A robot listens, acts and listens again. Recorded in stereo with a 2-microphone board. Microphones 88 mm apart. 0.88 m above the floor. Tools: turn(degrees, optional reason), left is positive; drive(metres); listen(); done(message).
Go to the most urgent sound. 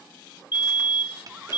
turn(degrees=55, reason="The fire alarm: about 55° left or 125° left.")
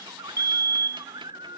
turn(degrees=40, reason="So it is at 40° left.")
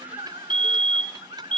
turn(degrees=20, reason="The fire alarm is now 20° left.")
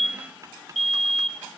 drive(metres=1.0)
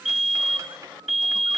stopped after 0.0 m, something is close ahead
done("Blocked. The fire alarm is further on, straight ahead.")